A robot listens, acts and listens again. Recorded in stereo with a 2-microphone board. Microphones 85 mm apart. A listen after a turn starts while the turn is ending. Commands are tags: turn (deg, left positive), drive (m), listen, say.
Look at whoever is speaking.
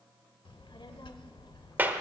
<turn deg="75"/>
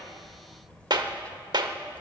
<turn deg="15"/>
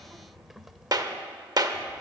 <say>Facing the child speaking.</say>